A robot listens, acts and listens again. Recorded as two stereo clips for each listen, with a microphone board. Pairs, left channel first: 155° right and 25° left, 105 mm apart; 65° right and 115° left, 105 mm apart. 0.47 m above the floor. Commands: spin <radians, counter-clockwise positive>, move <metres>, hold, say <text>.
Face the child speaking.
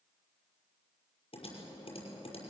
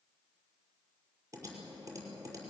hold
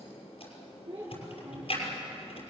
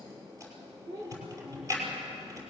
spin 1.05
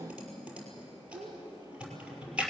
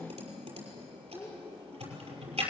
say Found it: a child speaking, straight ahead.